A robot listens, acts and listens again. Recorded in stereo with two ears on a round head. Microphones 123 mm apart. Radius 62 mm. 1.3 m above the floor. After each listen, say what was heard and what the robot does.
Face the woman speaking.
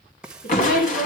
The woman speaking: about 70° left or 110° left. Turn 70° left.
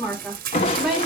Facing the woman speaking.